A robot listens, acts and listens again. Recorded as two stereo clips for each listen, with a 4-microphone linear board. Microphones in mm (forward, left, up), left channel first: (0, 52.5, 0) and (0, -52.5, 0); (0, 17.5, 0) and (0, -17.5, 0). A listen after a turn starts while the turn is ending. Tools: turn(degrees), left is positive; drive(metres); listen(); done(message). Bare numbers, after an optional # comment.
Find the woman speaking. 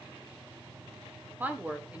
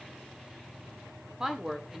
turn(-30)
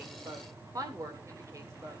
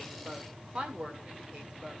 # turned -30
# So it is at 155° right.
turn(-155)
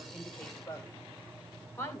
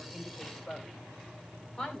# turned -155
# The woman speaking is now 25° left.
turn(25)
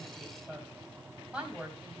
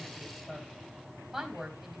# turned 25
# The woman speaking is now 10° right.
turn(-10)
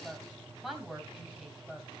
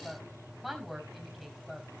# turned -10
done("Facing the woman speaking.")